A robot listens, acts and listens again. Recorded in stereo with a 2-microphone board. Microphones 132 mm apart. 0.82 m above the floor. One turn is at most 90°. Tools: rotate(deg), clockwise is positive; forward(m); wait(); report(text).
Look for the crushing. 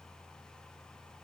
wait()
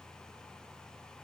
wait()
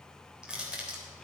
rotate(30)
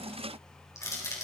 rotate(-25)
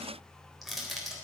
report("Found it: crushing, straight ahead, 2 to 4 m away.")